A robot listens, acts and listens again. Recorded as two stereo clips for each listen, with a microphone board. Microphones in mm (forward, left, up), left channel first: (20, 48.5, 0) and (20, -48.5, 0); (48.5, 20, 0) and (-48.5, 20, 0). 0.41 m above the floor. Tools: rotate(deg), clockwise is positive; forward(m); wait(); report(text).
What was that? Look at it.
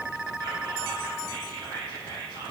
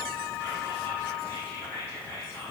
rotate(55)
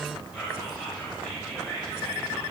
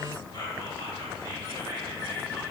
rotate(10)
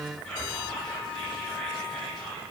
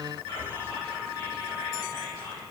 report("Found it: whispering, straight ahead.")